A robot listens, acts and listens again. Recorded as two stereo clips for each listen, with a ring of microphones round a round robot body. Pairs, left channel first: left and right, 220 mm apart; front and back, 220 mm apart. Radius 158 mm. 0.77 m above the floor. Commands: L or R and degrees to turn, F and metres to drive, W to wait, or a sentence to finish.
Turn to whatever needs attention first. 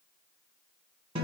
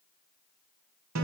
W
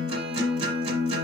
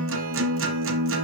W
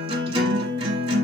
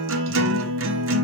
I can't make out anything urgent, only a guitar.